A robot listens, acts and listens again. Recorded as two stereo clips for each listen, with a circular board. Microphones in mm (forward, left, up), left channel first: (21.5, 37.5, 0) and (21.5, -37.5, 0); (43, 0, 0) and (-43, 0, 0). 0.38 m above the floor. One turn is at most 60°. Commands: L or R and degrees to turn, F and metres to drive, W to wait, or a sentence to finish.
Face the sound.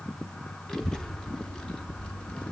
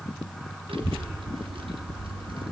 L60
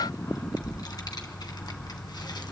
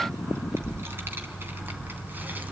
L60
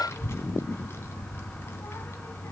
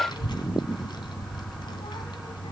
L30
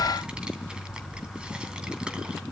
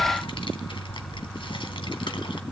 R15
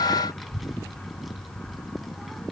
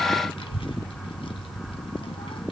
Found it: a child speaking, straight ahead, 2 to 4 m away.